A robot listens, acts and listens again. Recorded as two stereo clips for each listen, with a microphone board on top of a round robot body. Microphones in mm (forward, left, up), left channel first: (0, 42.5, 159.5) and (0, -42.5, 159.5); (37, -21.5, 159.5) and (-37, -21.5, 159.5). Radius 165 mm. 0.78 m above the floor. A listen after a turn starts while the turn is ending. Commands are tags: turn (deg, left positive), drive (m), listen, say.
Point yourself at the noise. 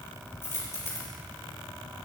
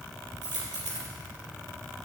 <turn deg="150"/>
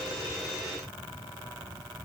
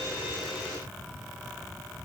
<say>I heard a dropped coin from this way, but can't make it out now.</say>